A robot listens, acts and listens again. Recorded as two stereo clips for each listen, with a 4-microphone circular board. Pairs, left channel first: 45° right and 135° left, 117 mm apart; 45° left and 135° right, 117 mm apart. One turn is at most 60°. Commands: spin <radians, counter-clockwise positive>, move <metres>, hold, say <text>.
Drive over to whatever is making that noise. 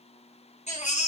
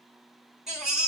spin -0.87
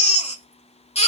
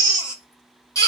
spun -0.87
spin -0.26
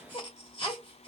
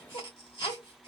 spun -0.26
move 1.0
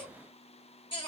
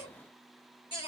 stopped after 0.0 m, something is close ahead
hold
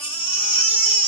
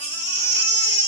say Something is in my way. I am facing the baby crying but have not reached it.